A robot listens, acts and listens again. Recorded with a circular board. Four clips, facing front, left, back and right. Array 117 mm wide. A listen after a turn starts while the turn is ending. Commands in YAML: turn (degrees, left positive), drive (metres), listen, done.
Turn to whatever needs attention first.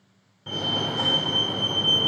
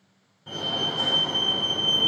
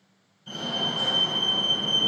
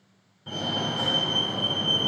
done: "Facing the fire alarm, 2 to 4 m away."